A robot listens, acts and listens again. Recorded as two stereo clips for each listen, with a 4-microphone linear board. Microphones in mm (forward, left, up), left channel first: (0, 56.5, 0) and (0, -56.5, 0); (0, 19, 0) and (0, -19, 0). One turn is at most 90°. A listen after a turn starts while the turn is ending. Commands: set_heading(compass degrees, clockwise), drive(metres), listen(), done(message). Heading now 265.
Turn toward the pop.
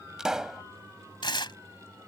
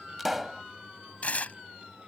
set_heading(295)
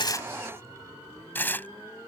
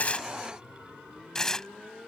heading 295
listen()
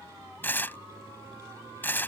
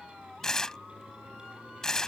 done("I heard a pop, but can't make it out now. It was about 25° left or 145° right.")